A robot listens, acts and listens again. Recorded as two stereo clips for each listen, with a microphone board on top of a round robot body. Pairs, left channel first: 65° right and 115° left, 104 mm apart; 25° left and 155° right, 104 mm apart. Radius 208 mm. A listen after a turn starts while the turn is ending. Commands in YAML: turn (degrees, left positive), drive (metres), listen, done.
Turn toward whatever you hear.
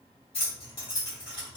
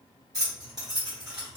turn: -115
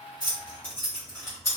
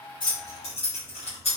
done: "Facing the keys jangling, 1 to 2 m away."